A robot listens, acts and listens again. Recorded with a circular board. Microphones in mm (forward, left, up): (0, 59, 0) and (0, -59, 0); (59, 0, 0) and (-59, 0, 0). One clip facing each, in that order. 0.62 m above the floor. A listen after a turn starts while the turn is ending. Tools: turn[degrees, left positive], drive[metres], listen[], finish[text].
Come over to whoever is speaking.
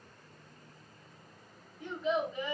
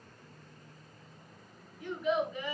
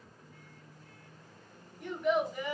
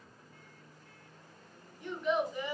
Thought: The child speaking: 30° left.
Action: turn[30]
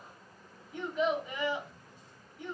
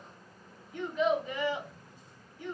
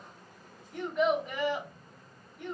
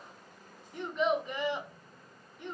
Thought: The child speaking is now 20° left.
Action: turn[20]
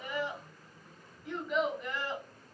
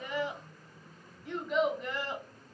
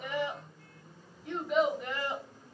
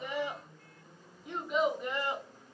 Action: drive[1.0]
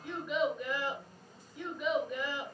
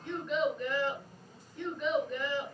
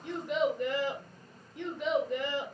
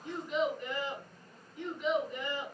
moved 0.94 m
Thought: The child speaking is now 10° left.
Action: turn[10]
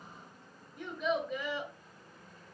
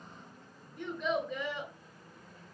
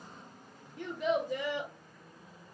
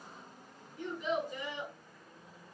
Action: drive[1.0]
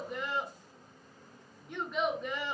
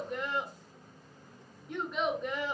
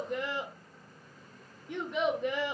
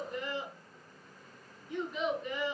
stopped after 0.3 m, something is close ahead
Action: finish[Arrived at the child speaking, straight ahead.]